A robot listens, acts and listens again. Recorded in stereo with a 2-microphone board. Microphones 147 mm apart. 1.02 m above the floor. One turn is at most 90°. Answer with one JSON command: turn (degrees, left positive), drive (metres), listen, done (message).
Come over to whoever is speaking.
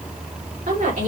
{"turn": -70}
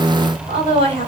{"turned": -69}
{"turn": -40}
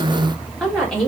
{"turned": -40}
{"drive": 1.0}
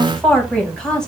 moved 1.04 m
{"drive": 1.0}
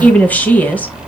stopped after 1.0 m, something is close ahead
{"turn": 10}
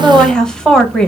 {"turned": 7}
{"done": "Arrived at the woman speaking, straight ahead."}